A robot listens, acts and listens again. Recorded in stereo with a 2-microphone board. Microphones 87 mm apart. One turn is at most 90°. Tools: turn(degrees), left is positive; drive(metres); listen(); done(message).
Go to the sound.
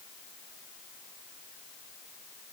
listen()
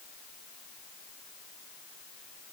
listen()
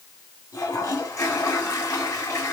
turn(degrees=40)
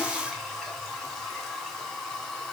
drive(metres=1.0)
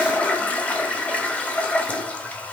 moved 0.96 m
turn(degrees=20)
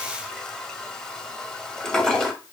turn(degrees=10)
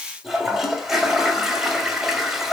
drive(metres=1.0)
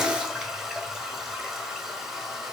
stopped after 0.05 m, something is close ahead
done("Arrived at the toilet flushing, straight ahead.")